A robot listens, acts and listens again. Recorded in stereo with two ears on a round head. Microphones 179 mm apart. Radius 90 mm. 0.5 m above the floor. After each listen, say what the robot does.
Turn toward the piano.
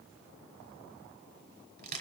Keep listening.
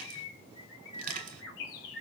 Keep listening.
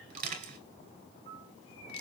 Turn 40° right.
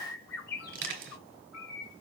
Keep listening.
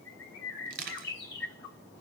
Keep listening.
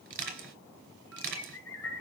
I heard a piano, but can't make it out now. It was about straight ahead or 100° right.